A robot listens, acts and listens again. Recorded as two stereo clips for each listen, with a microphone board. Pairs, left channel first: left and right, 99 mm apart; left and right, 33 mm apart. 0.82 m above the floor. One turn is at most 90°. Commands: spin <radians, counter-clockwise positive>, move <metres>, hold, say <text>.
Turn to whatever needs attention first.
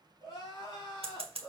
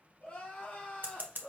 spin 0.79
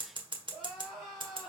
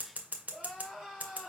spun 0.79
say Facing the crying, 2 to 4 m away.